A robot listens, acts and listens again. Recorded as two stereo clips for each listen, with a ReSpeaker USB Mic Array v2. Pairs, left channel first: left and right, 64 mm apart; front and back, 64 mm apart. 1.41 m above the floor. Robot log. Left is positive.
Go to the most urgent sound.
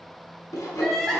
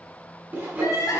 cmd fwd 1.0
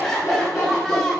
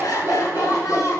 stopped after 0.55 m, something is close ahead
note: The crying is now 10° left.
cmd yaw +10
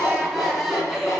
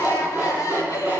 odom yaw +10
end: Blocked. The crying is further on, straight ahead.